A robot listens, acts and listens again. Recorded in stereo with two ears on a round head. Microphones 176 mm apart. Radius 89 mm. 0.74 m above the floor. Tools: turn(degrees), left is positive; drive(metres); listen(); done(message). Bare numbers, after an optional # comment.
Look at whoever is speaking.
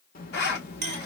# The child speaking: about 45° left or 135° left.
turn(45)
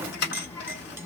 # So it is at 15° left.
turn(15)
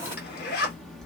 done("Found it: a child speaking, straight ahead, 1 to 2 m away.")